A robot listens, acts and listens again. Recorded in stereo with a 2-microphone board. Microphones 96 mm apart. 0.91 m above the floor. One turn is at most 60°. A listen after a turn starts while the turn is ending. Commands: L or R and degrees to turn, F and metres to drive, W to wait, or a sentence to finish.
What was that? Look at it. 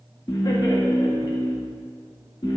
L50
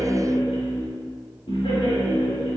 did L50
L60
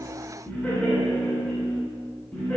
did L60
L15
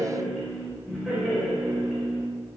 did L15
Facing the laughter, over 4 m away.